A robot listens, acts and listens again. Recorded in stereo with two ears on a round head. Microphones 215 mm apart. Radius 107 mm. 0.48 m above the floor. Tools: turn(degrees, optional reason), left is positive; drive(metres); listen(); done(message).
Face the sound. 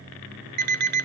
turn(degrees=-40, reason="The alarm clock: about 40° right or 140° right.")
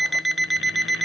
done("Found it: an alarm clock, straight ahead.")